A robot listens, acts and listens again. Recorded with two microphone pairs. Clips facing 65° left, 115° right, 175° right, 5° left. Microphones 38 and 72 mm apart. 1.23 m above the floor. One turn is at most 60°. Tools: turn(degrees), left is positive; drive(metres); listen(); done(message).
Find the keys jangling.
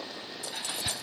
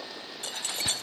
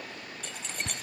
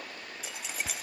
turn(degrees=-60)
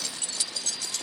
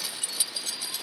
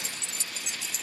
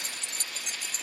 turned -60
turn(degrees=-40)
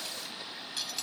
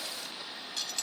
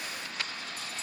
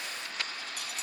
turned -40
turn(degrees=-20)
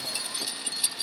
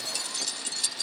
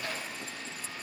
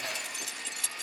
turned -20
done("Found it: keys jangling, straight ahead.")